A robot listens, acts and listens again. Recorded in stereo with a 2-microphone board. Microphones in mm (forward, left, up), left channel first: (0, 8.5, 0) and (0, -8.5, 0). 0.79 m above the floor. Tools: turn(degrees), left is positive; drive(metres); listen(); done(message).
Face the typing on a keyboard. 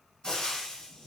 listen()
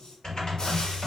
turn(degrees=50)
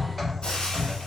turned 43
done("Found it: typing on a keyboard, straight ahead, 1 to 2 m away.")